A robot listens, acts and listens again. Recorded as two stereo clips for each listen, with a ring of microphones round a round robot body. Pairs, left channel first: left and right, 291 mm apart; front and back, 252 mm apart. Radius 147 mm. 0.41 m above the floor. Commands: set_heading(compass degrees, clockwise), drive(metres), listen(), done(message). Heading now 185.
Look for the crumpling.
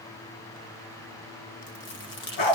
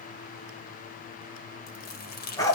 set_heading(140)
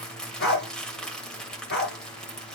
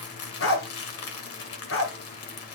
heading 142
done("Found it: crumpling, straight ahead, 1 to 2 m away.")